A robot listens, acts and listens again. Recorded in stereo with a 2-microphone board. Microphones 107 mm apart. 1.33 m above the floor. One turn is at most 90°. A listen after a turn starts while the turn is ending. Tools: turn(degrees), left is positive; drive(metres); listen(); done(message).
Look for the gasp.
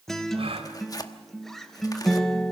turn(degrees=-65)
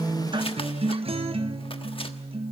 listen()
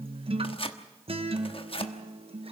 done("I heard a gasp, but can't make it out now. It was about straight ahead or 50° right.")